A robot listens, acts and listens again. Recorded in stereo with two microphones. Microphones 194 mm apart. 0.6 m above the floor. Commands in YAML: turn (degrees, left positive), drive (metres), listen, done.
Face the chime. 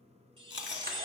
turn: -25
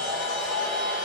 listen: true
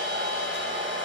listen: true
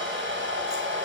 done: "I heard a chime, but can't make it out now. It was about straight ahead or 130° right."